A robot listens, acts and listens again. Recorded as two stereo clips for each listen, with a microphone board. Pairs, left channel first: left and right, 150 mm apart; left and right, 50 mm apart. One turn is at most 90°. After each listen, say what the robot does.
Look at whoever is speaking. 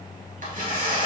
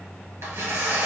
Keep listening.
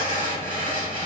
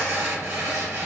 Keep listening.
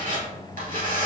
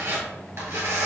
I can't make out anyone speaking to turn to.